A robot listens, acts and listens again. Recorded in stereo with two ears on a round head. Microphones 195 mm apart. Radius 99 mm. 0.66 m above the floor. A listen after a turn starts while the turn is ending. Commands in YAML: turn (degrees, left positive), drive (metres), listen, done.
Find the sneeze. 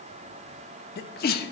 turn: 45
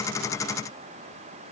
listen: true
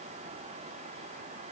done: "I heard a sneeze, but can't make it out now. It was about straight ahead or 90° left."